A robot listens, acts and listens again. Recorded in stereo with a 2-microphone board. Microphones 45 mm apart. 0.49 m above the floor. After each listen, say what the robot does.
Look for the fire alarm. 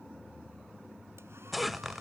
Keep listening.
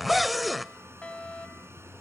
Turn 25° left.
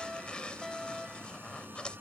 Facing the fire alarm.